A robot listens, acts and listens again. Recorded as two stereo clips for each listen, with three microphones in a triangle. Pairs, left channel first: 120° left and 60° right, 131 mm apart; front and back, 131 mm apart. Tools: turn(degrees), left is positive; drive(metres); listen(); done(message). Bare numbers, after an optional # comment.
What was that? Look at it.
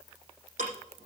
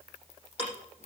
# The ticking: 45° right.
turn(-45)
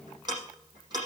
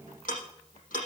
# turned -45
done("Found it: ticking, straight ahead.")